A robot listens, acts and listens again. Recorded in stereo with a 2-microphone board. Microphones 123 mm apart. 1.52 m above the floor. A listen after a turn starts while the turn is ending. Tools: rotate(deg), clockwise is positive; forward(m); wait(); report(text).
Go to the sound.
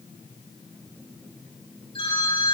rotate(-45)
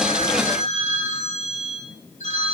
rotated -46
rotate(-85)
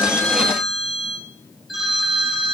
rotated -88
forward(1.0)
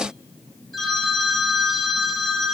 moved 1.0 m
forward(1.0)
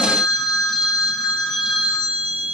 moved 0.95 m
forward(1.0)
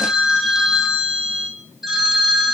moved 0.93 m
forward(1.0)
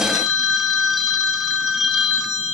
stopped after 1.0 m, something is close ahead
report("I am next to the phone ringing.")